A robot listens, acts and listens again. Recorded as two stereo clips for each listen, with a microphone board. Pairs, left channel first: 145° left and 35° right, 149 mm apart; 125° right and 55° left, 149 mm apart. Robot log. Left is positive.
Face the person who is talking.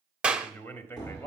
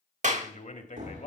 note: The man speaking: 145° right.
cmd yaw -145
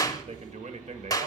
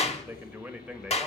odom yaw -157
note: The man speaking is now 30° right.
cmd yaw -30
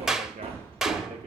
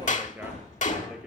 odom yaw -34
cmd idle
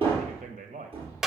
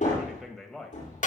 note: The man speaking is now 35° right.
cmd yaw -35
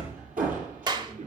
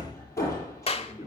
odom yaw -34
cmd idle
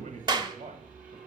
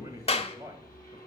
end: Facing the man speaking, 1 to 2 m away.